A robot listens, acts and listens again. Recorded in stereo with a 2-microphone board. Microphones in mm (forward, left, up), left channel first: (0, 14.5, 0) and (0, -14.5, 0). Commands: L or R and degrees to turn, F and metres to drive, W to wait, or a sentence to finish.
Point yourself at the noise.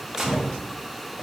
R30
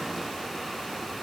W
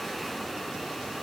I heard a gunshot, but can't make it out now. It was about 15° left or 135° right.